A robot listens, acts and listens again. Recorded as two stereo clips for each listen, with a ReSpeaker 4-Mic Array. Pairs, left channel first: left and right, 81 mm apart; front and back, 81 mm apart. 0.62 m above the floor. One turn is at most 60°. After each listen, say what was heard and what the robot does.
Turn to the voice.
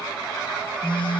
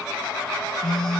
Keep listening.
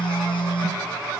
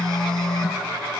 Keep listening.
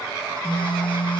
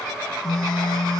I can't make out anyone speaking, only a phone buzzing.